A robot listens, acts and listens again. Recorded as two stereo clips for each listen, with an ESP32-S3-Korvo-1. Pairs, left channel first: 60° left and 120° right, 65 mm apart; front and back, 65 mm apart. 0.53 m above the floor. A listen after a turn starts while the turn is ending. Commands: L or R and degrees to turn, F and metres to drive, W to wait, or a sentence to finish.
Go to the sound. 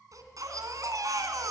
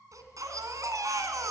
R150
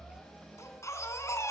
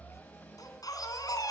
L20
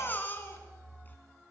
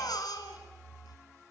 F1.0
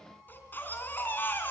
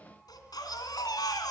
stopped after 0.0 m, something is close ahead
Blocked. The baby crying is further on, straight ahead.